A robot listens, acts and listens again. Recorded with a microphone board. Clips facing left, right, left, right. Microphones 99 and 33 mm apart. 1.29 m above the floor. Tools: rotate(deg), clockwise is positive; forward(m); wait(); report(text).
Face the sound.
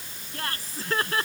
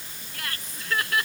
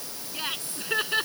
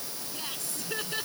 rotate(-35)
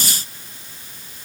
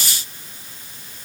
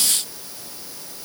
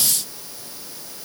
wait()
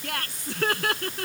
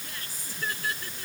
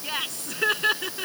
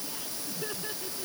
rotate(-110)
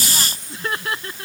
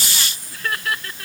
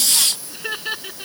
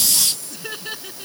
rotate(-25)
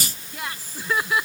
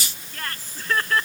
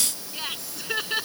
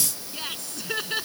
rotate(-10)
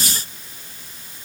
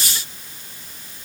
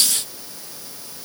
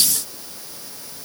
wait()
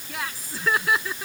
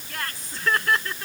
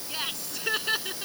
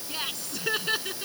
report("Found it: laughter, straight ahead.")